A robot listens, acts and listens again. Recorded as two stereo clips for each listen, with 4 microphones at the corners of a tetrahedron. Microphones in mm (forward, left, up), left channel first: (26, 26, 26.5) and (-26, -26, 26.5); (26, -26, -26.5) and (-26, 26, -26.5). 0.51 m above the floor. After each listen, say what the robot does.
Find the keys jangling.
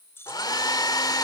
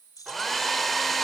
Turn 10° right.
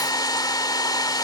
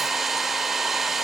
Keep listening.
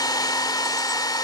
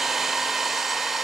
Keep listening.
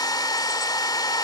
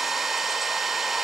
Facing where the keys jangling came from. I can't hear it now.